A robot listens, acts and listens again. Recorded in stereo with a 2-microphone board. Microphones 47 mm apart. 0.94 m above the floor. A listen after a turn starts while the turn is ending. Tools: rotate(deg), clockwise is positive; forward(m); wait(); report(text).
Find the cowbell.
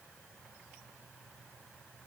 wait()
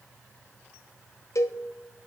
rotate(-75)
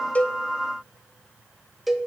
report("Found it: a cowbell, straight ahead, under 1 m away.")